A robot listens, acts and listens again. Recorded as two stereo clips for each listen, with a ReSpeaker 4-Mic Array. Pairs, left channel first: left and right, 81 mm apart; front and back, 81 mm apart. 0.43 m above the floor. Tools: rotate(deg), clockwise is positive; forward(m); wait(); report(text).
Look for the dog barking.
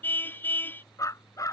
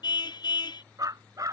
rotate(-135)
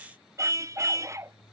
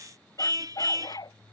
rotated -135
rotate(35)
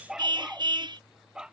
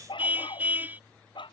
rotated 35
rotate(10)
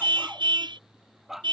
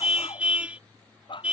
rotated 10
report("Found it: a dog barking, straight ahead.")